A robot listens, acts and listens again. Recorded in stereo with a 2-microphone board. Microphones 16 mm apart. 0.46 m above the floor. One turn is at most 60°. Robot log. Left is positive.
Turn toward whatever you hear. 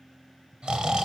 note: The snoring: about 70° right or 110° right.
cmd yaw -60
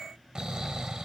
note: So it is at 45° right.
cmd yaw -45
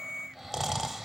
end: Facing the snoring.